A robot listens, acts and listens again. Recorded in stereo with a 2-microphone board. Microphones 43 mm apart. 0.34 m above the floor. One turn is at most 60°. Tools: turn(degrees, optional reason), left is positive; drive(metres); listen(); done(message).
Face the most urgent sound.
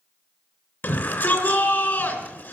turn(degrees=50, reason="The shout: about 50° left or 130° left.")
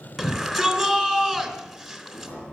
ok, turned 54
done("Found it: a shout, straight ahead, 2 to 4 m away.")